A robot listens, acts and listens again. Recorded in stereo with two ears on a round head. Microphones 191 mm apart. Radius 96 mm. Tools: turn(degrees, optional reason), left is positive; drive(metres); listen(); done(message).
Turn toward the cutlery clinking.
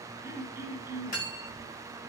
turn(degrees=40, reason="The cutlery clinking: about 40° left or 140° left.")
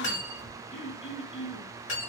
turn(degrees=95, reason="So it is at 95° left.")
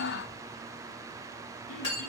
turn(degrees=30, reason="The cutlery clinking is now 30° left.")
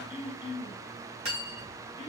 turn(degrees=-30, reason="The cutlery clinking is now 30° right.")
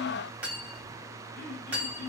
turn(degrees=-10, reason="The cutlery clinking is now 10° right.")
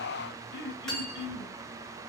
done("Facing the cutlery clinking, 1 to 2 m away.")